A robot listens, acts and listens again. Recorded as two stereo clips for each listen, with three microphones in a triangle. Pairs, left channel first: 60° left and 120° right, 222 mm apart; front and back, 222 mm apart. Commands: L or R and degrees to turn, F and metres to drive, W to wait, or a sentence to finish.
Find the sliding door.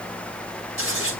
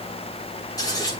W
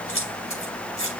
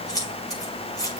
W
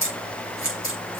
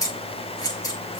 I can't make out a sliding door to turn to.